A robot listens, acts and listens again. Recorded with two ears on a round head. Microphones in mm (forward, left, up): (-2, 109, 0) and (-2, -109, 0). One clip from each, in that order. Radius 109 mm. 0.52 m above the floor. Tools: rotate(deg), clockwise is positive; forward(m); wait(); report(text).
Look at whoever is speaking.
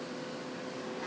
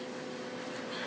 wait()
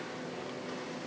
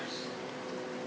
wait()
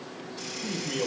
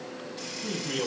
rotate(20)
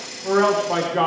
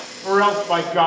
rotate(140)
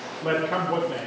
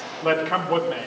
rotate(45)
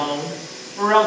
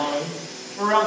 rotate(-20)
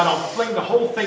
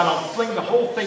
report("Facing the man speaking.")